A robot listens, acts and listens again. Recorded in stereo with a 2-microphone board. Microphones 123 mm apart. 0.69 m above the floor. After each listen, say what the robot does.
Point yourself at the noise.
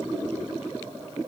Keep listening.
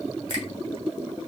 Turn 35° left.
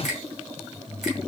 Found it: a finger snap, straight ahead.